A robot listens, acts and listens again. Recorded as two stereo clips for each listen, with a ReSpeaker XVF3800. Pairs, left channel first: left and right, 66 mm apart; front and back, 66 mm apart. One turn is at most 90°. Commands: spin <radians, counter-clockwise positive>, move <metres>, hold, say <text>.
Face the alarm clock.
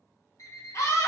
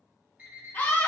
spin 1.57
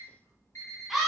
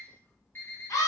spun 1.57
spin 1.05
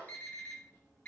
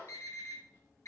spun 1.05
spin 0.52
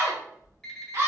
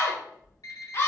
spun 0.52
spin 0.17
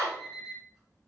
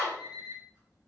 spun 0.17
say Facing the alarm clock, 1 to 2 m away.